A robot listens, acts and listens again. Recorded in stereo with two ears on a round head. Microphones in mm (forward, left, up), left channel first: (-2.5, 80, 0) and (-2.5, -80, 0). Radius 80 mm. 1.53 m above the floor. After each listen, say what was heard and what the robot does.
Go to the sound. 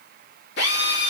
The drill: about 65° left or 115° left. Turn 65° left.
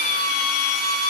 So it is at 50° left. Turn 50° left.
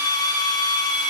The drill is now 25° left. Turn 25° left.
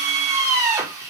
The drill is now 20° right. Turn 20° right.
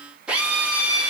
Drive 1.0 m forward.
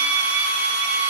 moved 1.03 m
The drill is now 10° right. Turn 10° right.
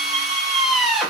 Drive 1.0 m forward.
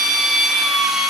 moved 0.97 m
Drive 1.0 m forward.
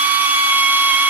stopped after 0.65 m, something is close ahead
The drill is now 10° right. Turn 10° right.
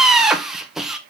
Arrived at the drill, straight ahead.